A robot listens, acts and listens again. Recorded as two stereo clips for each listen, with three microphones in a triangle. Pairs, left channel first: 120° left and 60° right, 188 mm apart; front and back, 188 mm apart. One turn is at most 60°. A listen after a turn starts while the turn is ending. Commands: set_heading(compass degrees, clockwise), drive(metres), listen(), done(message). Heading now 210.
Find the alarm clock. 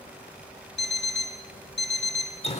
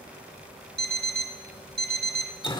set_heading(150)
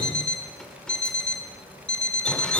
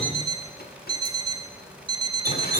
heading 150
set_heading(90)
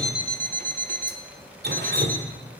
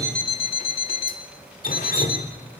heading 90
set_heading(50)
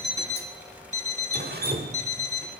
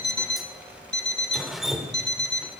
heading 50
set_heading(60)
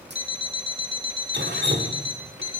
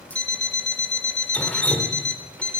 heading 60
done("Found it: an alarm clock, straight ahead.")